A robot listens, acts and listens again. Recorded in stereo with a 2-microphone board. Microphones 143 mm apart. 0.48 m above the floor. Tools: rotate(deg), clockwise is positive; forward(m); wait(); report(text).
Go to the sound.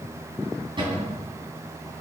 rotate(35)
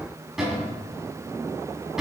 forward(1.0)
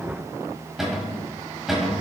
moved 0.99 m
forward(1.0)
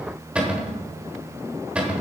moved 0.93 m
rotate(10)
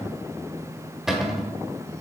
forward(1.0)
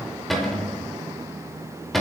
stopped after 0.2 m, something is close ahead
report("I am next to the cupboard door.")